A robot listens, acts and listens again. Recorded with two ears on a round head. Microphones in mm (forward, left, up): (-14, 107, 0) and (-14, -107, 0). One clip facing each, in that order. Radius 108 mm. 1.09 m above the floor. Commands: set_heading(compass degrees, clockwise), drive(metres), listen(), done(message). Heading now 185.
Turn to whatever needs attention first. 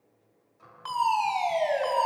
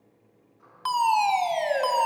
set_heading(240)
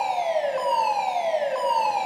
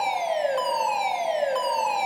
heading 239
set_heading(284)
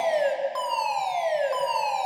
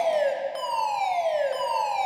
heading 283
done("Facing the fire alarm, 2 to 4 m away.")